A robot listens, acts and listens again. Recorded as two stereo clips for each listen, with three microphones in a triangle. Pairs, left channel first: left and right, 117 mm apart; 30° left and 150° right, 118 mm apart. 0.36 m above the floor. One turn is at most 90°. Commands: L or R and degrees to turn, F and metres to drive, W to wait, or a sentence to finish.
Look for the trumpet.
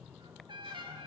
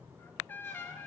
R45
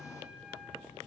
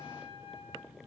R10
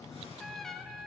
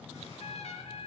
Facing the trumpet, under 1 m away.